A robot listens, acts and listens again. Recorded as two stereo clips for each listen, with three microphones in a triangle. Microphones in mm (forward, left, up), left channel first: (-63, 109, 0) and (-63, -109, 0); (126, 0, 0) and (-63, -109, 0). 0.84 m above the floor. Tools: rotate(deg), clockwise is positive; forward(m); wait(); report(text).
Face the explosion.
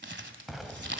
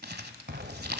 rotate(-180)
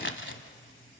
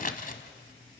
report("I heard an explosion from this way, but can't make it out now.")